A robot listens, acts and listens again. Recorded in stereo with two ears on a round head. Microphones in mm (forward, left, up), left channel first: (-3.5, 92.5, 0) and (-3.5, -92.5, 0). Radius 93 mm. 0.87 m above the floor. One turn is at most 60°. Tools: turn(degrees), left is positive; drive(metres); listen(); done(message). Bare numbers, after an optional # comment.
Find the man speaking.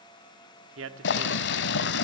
# The man speaking: about 70° right or 110° right.
turn(-60)
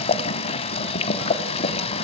listen()
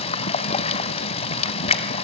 listen()
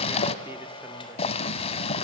done("I heard a man speaking, but can't make it out now. It was about 10° right or 50° right.")